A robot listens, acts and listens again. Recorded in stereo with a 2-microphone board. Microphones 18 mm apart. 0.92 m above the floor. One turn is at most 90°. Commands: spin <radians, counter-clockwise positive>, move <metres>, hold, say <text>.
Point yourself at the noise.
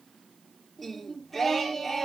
spin 0.52
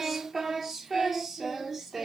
spin -0.35
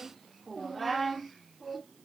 say Facing the singing, 2 to 4 m away.